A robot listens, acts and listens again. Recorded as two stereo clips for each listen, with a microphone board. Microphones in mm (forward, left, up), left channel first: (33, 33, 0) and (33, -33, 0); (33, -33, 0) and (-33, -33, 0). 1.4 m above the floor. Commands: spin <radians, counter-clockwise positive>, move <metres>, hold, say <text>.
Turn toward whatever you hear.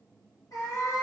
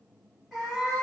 spin 1.75
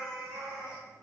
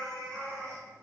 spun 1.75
spin -0.17
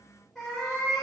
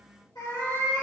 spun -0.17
say Found it: a cat meowing, straight ahead, 2 to 4 m away.